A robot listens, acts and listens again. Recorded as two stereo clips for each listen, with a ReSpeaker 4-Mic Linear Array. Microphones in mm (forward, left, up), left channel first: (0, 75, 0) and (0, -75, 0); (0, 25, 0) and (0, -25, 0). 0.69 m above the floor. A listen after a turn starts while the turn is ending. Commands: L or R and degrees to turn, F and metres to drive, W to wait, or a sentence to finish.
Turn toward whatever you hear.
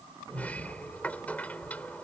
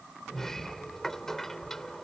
L30
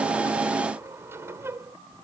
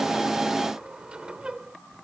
R20
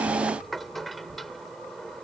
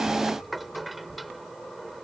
Facing the sliding door.